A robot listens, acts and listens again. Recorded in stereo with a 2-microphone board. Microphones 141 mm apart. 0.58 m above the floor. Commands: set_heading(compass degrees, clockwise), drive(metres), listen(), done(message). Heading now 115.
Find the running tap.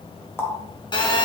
set_heading(100)
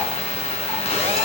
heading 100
listen()
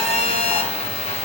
listen()
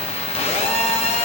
done("I heard a running tap, but can't make it out now. It was about straight ahead or 150° left.")